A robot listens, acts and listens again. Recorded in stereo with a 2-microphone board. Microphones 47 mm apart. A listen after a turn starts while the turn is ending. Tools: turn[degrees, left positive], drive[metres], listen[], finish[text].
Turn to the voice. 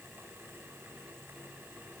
Action: listen[]
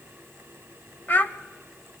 Thought: The child speaking: about 40° left or 140° left.
Action: turn[40]
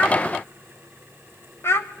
Thought: So it is at 90° left.
Action: turn[90]
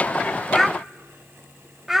Thought: The child speaking is now 10° right.
Action: turn[-10]
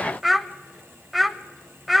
Action: finish[Found it: a child speaking, straight ahead.]